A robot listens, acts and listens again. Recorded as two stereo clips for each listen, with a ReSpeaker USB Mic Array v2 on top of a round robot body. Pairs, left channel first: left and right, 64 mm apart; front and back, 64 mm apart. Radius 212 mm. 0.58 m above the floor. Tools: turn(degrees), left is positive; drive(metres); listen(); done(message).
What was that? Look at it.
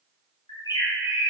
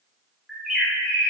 turn(degrees=100)
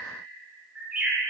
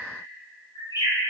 turn(degrees=-15)
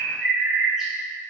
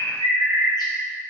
done("Found it: a bird, straight ahead, 1 to 2 m away.")